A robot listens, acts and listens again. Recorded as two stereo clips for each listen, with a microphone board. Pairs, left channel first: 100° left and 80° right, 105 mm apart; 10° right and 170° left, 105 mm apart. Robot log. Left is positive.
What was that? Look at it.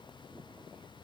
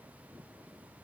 cmd idle
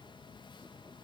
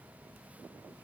cmd idle
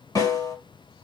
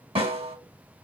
note: The snare drum: 155° left.
cmd yaw +155
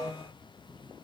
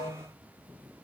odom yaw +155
note: The snare drum is now 55° left.
cmd yaw +55
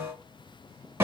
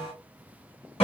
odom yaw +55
note: The snare drum is now 15° right.
cmd yaw -15
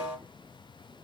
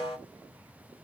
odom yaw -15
end: Found it: a snare drum, straight ahead.